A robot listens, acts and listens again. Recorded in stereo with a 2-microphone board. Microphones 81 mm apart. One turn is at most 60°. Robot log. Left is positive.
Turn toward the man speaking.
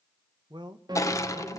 note: The man speaking: about 70° right or 110° right.
cmd yaw -60
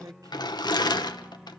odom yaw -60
note: So it is at 50° right.
cmd yaw -50
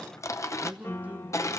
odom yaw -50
note: The man speaking is now 20° right.
cmd yaw -20
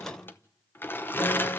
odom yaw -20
cmd idle
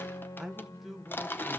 end: Facing the man speaking.